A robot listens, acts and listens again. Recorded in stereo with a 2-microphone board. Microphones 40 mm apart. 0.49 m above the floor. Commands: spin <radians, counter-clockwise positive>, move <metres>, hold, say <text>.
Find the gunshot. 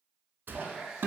spin -0.96
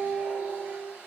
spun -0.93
hold
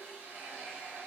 say I heard a gunshot, but can't make it out now. It was about straight ahead or 70° right.